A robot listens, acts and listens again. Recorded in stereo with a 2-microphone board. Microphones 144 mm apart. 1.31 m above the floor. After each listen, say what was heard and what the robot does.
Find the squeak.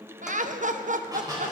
The squeak: about 25° right or 155° right. Turn 25° right.
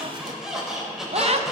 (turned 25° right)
Facing the squeak, over 4 m away.